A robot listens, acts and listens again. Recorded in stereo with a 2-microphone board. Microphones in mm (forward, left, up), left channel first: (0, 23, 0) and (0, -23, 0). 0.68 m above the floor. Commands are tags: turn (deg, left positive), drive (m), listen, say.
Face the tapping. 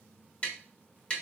<turn deg="25"/>
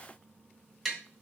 <say>Facing the tapping.</say>